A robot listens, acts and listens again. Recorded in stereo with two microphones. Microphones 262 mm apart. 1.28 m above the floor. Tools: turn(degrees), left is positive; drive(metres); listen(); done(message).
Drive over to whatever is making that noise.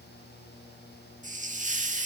turn(degrees=-30)
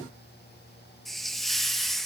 drive(metres=1.0)
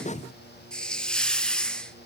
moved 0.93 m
drive(metres=1.0)
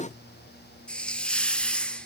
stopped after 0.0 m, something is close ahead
done("I am next to the hiss.")